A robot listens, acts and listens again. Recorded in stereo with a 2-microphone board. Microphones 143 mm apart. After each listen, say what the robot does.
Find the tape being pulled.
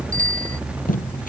Turn 70° left.
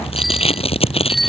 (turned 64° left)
Turn 45° left.
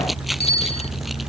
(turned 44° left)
Keep listening.
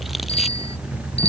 Keep listening.
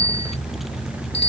Facing where the tape being pulled came from. I can't hear it now.